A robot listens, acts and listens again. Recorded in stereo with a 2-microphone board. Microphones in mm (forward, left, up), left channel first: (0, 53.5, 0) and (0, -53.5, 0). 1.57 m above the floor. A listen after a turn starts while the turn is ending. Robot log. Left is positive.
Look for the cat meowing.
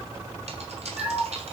cmd yaw -30
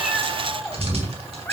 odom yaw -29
note: So it is at 15° left.
cmd yaw +15
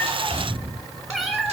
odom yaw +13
end: Facing the cat meowing, 2 to 4 m away.